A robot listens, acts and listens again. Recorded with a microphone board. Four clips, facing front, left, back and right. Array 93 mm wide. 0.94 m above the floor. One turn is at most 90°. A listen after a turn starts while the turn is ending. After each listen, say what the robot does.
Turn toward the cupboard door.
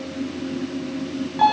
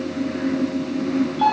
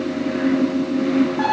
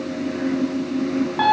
Keep listening.
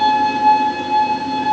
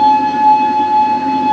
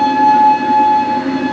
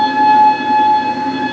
Keep listening.
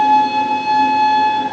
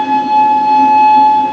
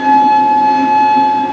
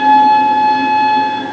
I can't make out a cupboard door to turn to.